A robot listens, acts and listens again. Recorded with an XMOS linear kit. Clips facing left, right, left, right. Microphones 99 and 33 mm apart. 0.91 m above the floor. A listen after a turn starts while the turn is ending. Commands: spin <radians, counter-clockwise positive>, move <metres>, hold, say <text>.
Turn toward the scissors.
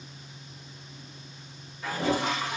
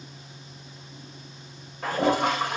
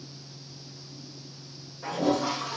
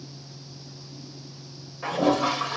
hold
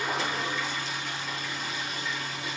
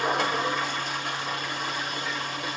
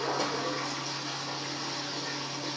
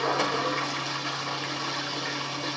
hold
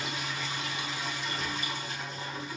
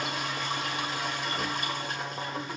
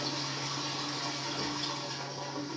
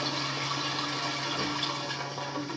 say I can't make out scissors, only a toilet flushing.